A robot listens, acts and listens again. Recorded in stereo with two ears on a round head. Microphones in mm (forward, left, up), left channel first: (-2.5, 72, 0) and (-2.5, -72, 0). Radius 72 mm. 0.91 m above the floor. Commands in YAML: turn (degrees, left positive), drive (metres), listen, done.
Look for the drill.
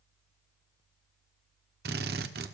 turn: -70
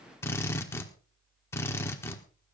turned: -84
turn: 15
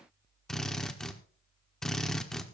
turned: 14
done: "Facing the drill."